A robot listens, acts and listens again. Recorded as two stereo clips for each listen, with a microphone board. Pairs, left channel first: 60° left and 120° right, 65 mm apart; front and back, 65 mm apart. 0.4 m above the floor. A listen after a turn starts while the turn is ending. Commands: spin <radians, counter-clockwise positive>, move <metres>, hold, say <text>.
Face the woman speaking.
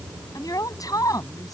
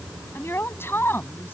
spin 0.96
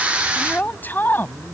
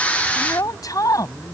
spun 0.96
say Facing the woman speaking.